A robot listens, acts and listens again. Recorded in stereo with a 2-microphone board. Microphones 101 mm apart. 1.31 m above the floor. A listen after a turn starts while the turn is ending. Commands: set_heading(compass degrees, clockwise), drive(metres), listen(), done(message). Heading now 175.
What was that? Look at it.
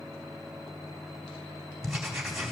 set_heading(145)
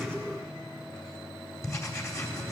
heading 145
set_heading(355)
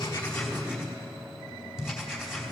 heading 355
done("Found it: writing, straight ahead.")